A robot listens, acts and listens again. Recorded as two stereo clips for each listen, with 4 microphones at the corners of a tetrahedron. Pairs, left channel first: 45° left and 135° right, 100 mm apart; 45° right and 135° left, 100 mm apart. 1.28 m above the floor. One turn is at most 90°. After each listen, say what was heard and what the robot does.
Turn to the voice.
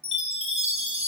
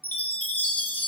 Keep listening.
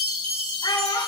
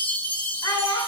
Facing the child speaking.